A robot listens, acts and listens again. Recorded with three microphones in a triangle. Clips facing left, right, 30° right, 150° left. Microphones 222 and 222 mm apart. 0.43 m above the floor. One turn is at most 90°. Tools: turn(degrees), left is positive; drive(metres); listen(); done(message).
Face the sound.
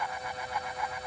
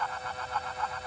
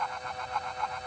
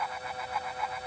listen()
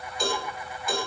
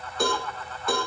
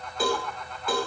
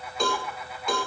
turn(degrees=-90)
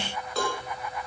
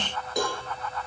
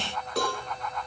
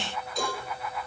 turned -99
turn(degrees=-15)
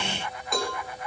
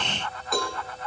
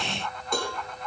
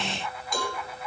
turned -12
done("Facing the cowbell, over 4 m away.")